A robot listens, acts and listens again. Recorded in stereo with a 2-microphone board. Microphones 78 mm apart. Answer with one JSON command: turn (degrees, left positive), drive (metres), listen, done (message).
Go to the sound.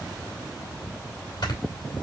{"turn": 65}
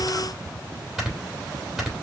{"drive": 1.0}
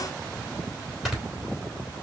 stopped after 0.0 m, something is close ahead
{"done": "Something is in my way. I am facing the snoring but have not reached it."}